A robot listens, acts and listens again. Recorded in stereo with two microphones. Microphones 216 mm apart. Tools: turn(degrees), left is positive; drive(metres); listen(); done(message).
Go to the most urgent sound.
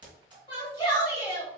turn(degrees=20)
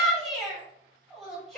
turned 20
drive(metres=1.0)
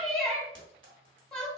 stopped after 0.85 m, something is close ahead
done("Arrived at the shout, straight ahead.")